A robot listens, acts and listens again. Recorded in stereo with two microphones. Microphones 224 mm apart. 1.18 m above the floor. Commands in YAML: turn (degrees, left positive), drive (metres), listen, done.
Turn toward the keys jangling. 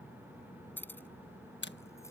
turn: 30
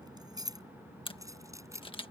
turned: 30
turn: -15
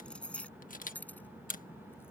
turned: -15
done: "Found it: keys jangling, straight ahead."